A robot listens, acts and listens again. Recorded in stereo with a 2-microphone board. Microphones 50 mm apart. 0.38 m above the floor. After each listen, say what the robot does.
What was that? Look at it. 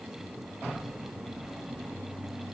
Keep listening.
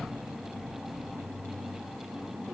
Keep listening.
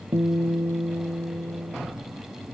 Turn 70° right.
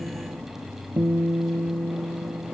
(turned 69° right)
Turn 45° right.
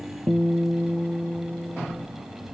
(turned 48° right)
Found it: a guitar, straight ahead.